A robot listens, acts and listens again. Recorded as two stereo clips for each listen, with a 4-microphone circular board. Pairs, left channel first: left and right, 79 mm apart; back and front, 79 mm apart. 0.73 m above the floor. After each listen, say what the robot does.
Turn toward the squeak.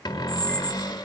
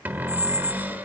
Turn 10° left.
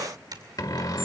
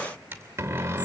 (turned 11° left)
Keep listening.
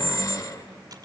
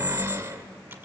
Found it: a squeak, straight ahead, under 1 m away.